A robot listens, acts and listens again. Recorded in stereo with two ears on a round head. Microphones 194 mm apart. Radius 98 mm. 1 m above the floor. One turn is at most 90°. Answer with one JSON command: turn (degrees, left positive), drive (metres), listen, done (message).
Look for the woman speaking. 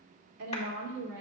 {"turn": -45}
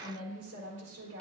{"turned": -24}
{"turn": -90}
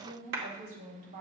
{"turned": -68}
{"turn": -45}
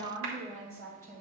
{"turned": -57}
{"turn": 10}
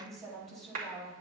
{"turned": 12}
{"done": "Found it: a woman speaking, straight ahead, over 4 m away."}